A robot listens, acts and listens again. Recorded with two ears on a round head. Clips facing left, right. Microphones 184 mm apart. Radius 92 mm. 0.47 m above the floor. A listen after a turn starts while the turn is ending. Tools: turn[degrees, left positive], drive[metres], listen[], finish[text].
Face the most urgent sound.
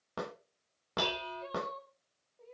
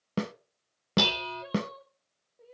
Action: turn[-30]
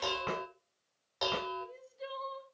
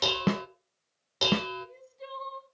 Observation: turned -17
Action: finish[Found it: crying, straight ahead.]